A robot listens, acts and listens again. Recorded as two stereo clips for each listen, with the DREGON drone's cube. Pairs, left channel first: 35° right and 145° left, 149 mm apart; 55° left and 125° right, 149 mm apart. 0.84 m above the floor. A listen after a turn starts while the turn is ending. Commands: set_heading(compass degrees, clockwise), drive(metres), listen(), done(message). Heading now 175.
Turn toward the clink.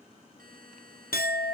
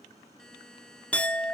set_heading(200)
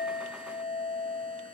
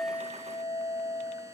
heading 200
done("Found it: a clink, straight ahead.")